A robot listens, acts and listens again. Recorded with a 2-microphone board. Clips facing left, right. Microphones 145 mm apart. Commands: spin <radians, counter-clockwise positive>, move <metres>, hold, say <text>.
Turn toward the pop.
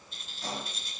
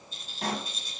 spin -1.57
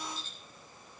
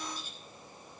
say I heard a pop from this way, but can't make it out now.